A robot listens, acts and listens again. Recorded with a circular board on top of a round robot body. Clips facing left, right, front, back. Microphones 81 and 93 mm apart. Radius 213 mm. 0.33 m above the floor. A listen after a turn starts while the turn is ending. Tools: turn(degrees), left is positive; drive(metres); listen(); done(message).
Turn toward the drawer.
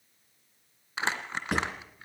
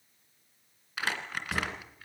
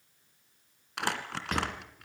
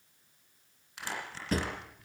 turn(degrees=125)
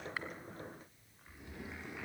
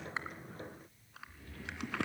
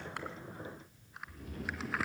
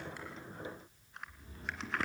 listen()
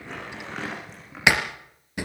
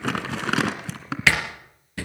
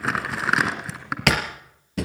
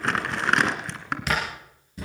turn(degrees=15)
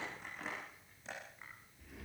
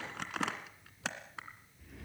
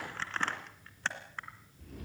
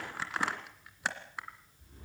listen()
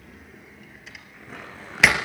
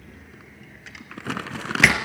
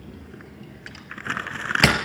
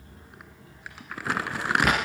done("Facing the drawer, 2 to 4 m away.")